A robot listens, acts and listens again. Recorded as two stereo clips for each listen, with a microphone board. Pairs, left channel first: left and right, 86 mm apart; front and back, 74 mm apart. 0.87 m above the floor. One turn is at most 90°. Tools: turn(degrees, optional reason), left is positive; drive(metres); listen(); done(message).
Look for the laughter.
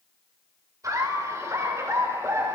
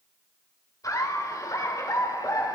turn(degrees=-35, reason="The laughter: 35° right.")
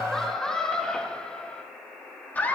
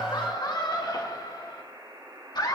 turn(degrees=20, reason="The laughter is now 20° left.")
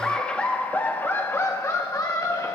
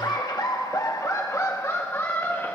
turn(degrees=50, reason="The laughter is now 50° left.")
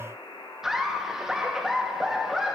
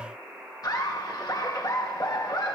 done("Found it: laughter, straight ahead, 1 to 2 m away.")